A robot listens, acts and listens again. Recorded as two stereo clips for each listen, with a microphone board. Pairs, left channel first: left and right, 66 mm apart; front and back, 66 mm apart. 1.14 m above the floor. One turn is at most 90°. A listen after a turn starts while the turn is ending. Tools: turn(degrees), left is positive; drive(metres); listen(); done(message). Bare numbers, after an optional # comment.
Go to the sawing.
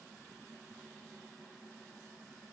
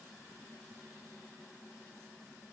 listen()
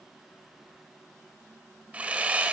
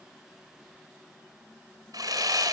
# The sawing: 160° right.
turn(-90)
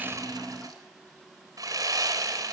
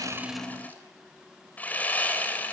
# The sawing is now 65° right.
turn(-65)
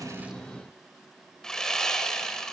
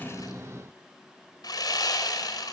# The sawing is now 10° left.
turn(10)
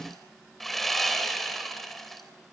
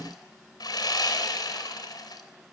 drive(1.0)
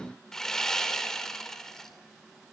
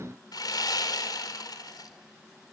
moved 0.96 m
# The sawing is now 10° left.
turn(10)
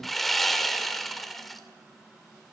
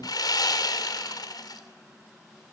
drive(1.0)
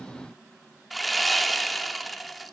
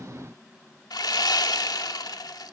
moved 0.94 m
drive(1.0)
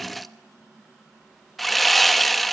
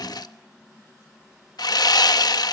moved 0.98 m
drive(1.0)
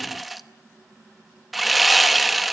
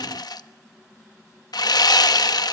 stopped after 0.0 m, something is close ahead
done("I am next to the sawing.")